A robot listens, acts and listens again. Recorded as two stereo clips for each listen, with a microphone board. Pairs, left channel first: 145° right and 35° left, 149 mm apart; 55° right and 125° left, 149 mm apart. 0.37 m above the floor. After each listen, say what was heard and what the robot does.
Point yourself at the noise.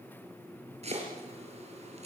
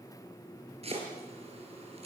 The chopping: 80° left. Turn 80° left.
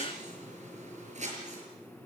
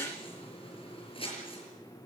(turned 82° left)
Found it: chopping, straight ahead, over 4 m away.